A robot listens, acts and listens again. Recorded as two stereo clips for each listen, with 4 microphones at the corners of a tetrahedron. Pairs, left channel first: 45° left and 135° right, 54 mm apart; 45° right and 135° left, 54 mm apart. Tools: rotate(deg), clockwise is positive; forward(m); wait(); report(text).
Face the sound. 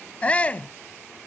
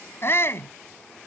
rotate(15)
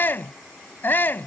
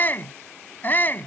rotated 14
report("Facing the shout.")